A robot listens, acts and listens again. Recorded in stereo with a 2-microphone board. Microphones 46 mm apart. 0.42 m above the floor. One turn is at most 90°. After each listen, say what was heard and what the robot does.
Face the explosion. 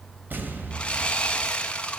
The explosion: about 50° right or 130° right. Turn 50° right.
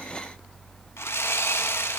Keep listening.
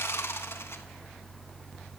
I heard an explosion, but can't make it out now. It was about straight ahead or 80° right.